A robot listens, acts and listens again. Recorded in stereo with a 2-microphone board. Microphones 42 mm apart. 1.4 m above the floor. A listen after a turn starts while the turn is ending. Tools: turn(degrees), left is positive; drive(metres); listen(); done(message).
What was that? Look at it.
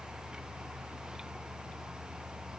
listen()
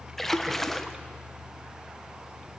turn(degrees=30)
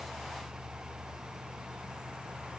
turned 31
listen()
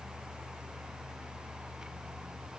done("I heard a splash, but can't make it out now. It was about 25° right or 140° left.")